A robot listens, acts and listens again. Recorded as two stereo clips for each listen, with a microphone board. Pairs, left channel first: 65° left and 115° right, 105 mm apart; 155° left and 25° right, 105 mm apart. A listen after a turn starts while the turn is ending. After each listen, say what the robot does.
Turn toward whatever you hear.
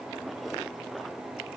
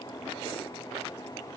Keep listening.
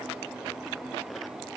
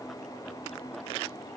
Keep listening.
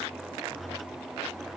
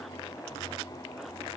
I can't make out anything to turn to.